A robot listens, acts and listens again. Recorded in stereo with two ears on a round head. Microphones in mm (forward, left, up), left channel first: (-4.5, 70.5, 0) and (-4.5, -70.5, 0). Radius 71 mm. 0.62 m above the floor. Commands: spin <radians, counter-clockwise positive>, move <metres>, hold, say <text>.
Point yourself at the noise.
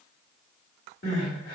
spin 1.05
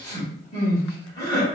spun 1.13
spin 0.44
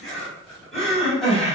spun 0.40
say Found it: crying, straight ahead, 1 to 2 m away.